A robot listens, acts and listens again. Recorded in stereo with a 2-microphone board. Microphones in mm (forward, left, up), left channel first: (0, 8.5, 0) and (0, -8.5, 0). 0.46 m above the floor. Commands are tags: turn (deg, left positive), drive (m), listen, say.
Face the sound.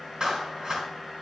<turn deg="-60"/>
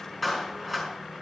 <say>Found it: a clap, straight ahead, over 4 m away.</say>